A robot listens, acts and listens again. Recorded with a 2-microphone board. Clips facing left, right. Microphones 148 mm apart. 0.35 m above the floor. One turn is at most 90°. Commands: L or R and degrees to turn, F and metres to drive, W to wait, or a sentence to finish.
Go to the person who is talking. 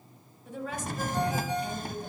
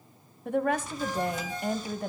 R60
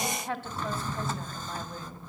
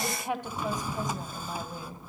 R15
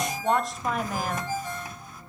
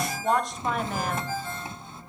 F1.0
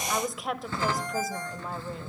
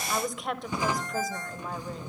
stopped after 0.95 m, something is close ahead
I am next to the woman speaking.